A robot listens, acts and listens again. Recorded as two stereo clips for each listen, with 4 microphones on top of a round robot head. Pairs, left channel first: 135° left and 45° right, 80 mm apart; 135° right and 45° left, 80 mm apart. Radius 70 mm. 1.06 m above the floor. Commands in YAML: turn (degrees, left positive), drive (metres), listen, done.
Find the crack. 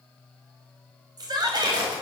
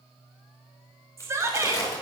turn: -80
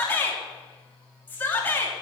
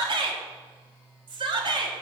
done: "Facing where the crack came from. I can't hear it now."